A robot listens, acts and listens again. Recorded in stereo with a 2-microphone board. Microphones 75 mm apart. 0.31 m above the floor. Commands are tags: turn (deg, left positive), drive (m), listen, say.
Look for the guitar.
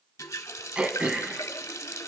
<listen/>
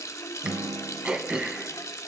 <turn deg="-90"/>
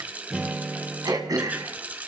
<say>Facing the guitar.</say>